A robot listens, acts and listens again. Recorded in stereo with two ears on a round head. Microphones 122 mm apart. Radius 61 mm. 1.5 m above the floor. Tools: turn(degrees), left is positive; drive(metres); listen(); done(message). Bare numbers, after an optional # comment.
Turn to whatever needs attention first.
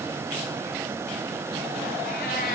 listen()
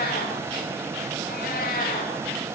listen()
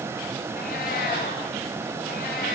done("I can't make out anything urgent, only a cat meowing.")